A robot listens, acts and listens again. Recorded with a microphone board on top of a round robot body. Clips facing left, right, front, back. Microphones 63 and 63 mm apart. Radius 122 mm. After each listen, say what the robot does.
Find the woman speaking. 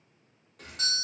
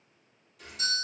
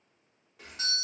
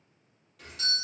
Keep listening.
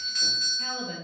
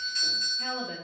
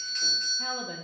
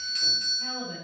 Found it: a woman speaking, straight ahead, under 1 m away.